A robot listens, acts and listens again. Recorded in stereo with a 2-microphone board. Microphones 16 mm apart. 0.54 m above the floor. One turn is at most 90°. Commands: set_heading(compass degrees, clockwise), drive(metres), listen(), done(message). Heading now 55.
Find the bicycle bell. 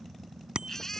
set_heading(120)
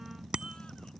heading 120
set_heading(175)
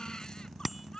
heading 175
done("Facing the bicycle bell.")